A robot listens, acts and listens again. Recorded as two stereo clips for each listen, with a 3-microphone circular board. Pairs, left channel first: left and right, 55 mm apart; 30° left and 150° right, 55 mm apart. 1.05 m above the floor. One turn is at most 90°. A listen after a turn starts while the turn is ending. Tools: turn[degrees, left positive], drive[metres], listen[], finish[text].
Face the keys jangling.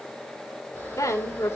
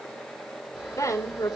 Action: listen[]
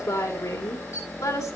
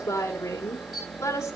Action: listen[]
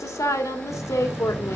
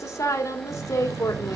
Thought: The keys jangling: 160° right.
Action: turn[-90]
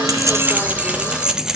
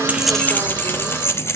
Thought: The keys jangling is now 10° right.
Action: turn[-10]
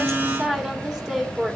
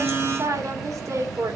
Thought: The keys jangling is now 20° left.
Action: turn[20]
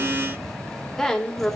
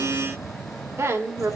Action: finish[Found it: keys jangling, straight ahead, 1 to 2 m away.]